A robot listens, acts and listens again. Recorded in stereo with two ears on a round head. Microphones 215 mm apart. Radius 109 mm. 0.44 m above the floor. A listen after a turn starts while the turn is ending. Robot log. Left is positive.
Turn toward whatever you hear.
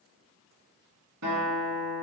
note: The guitar: about 70° right or 110° right.
cmd yaw -70
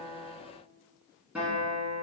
end: Facing the guitar, 1 to 2 m away.